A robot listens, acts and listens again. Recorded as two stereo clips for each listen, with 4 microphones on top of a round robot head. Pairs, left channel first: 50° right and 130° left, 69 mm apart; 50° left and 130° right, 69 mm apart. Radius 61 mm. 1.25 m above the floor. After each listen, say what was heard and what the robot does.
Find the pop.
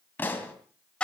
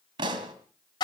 The pop: 115° right. Turn 115° right.
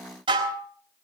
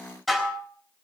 I heard a pop from this way, but can't make it out now.